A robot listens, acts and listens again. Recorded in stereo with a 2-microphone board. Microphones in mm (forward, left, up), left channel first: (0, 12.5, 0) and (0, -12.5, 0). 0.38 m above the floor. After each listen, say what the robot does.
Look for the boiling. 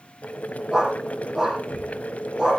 Turn 70° left.
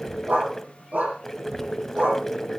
Turn 10° left.
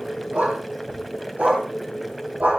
Facing the boiling.